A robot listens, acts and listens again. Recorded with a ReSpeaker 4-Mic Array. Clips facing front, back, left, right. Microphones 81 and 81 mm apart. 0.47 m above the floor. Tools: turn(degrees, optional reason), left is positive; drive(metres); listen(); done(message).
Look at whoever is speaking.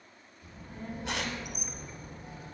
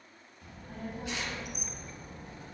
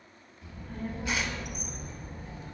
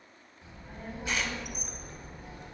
turn(degrees=-170, reason="The child speaking: 170° right.")
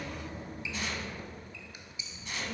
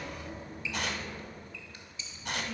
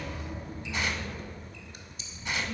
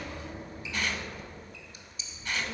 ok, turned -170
turn(degrees=-30, reason="The child speaking is now 30° right.")
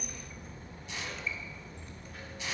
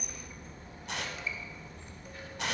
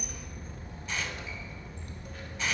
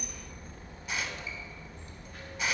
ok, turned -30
done("Found it: a child speaking, straight ahead, 2 to 4 m away.")